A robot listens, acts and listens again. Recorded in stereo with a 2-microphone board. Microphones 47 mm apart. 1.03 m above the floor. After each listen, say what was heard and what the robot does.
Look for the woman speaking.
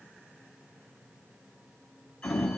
Keep listening.
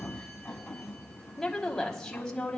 The woman speaking: about 20° left or 160° left. Turn 20° left.
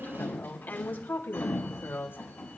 So it is at 125° left. Turn 125° left.
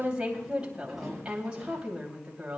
The woman speaking is now 25° right. Turn 25° right.
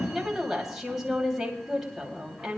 The woman speaking is now 10° right. Turn 10° right.
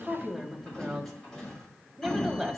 Found it: a woman speaking, straight ahead, 2 to 4 m away.